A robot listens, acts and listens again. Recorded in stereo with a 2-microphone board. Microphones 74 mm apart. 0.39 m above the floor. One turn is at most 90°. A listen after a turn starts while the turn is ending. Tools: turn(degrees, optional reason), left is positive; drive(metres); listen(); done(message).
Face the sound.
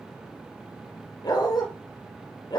turn(degrees=70, reason="The dog barking: about 70° left or 110° left.")
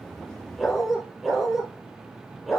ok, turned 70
done("Facing the dog barking, 2 to 4 m away.")